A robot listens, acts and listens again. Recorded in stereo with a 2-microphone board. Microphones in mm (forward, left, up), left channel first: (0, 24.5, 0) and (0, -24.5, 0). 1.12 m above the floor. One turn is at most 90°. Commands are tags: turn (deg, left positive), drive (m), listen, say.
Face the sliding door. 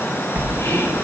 <turn deg="-35"/>
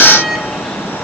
<say>Facing the sliding door, under 1 m away.</say>